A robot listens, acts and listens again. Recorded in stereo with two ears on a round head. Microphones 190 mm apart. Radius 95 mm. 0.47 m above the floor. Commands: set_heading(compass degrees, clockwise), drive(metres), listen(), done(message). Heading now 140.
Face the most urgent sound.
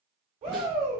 set_heading(170)
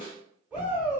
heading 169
done("Facing the shout.")